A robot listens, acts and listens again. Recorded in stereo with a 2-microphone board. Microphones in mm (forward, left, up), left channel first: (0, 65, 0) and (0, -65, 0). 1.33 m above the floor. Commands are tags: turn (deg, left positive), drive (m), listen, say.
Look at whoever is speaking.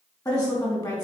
<turn deg="30"/>
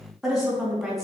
<say>Found it: a woman speaking, straight ahead, 2 to 4 m away.</say>